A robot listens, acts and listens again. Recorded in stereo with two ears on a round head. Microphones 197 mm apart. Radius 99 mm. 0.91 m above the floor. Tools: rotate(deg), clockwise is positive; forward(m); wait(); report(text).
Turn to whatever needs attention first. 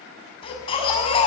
rotate(-25)
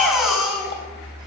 report("Facing the baby crying.")